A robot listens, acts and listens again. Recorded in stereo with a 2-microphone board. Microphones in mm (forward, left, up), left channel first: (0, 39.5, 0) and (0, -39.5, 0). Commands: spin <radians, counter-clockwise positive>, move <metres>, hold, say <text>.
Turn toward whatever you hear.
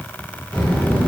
spin 0.52
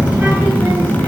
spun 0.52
spin -0.52
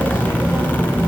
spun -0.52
spin -0.52
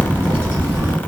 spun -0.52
spin -0.61
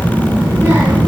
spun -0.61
spin -0.61
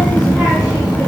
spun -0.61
say Found it: a child speaking, straight ahead, 1 to 2 m away.